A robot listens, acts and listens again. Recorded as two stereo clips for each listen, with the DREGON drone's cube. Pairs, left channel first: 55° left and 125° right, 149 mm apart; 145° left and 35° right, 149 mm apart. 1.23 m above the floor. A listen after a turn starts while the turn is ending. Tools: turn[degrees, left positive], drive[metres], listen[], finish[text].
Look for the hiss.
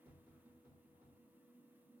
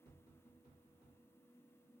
Action: listen[]
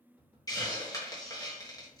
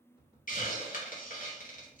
Thought: The hiss: 120° left.
Action: turn[120]
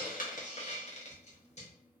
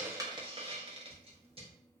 Thought: The hiss is now 15° left.
Action: turn[15]
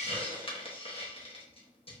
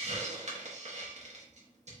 Action: finish[Found it: a hiss, straight ahead.]